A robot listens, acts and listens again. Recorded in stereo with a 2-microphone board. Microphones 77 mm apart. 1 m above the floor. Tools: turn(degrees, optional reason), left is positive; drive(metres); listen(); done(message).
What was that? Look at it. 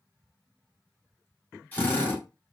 turn(degrees=25, reason="The drill: about 25° left or 155° left.")
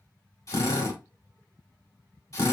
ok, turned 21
turn(degrees=135, reason="So it is at 135° left.")
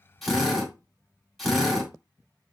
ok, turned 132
done("Found it: a drill, straight ahead.")